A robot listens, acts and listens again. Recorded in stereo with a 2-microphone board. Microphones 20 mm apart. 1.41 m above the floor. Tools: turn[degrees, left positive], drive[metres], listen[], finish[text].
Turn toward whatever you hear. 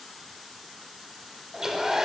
Thought: The hair dryer: about 25° right or 155° right.
Action: turn[-25]
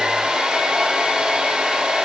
Thought: So it is at 130° right.
Action: turn[-130]
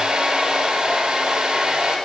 Thought: The hair dryer is now 50° right.
Action: turn[-50]
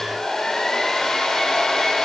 Thought: The hair dryer is now 25° left.
Action: turn[25]
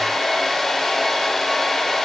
Thought: The hair dryer is now 15° left.
Action: turn[15]
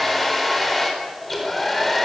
Action: finish[Facing the hair dryer, over 4 m away.]